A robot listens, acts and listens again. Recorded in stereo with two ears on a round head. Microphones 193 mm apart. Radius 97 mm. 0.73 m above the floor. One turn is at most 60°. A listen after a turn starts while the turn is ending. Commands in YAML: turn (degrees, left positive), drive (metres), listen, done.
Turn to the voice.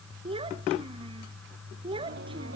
turn: -25
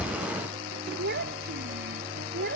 turn: -60
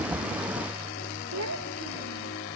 turn: -60
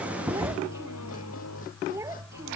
turn: -15
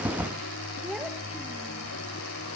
listen: true
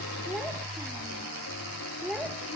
done: "Facing the child speaking."